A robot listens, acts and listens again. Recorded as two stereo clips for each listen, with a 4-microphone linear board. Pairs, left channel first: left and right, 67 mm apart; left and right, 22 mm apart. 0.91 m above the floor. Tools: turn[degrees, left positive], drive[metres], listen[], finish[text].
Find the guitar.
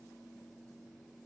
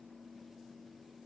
Action: listen[]
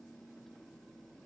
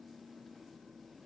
Action: listen[]
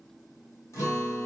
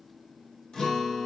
Thought: The guitar: about 50° left or 130° left.
Action: turn[50]
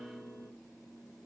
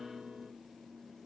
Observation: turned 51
Thought: So it is at 15° left.
Action: turn[15]
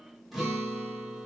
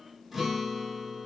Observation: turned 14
Action: finish[Found it: a guitar, straight ahead, 1 to 2 m away.]